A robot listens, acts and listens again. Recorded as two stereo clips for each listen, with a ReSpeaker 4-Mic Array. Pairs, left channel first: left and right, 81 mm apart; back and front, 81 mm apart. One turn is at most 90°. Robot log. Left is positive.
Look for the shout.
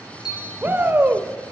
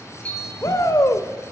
note: The shout: 150° right.
cmd yaw -90
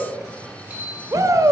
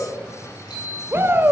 note: The shout is now 55° right.
cmd yaw -55
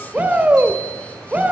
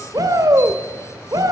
note: The shout is now 25° right.
cmd yaw -25
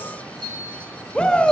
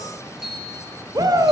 note: The shout is now 15° left.
cmd yaw +15
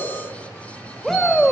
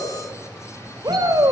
end: Found it: a shout, straight ahead, 1 to 2 m away.